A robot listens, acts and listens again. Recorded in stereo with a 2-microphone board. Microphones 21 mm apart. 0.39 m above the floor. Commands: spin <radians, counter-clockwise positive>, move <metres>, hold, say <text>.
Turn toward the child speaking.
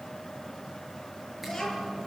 spin 0.26
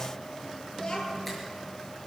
spin 2.62
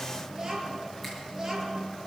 spin -0.35
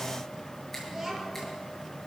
spin -0.17
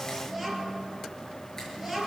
say Found it: a child speaking, straight ahead, over 4 m away.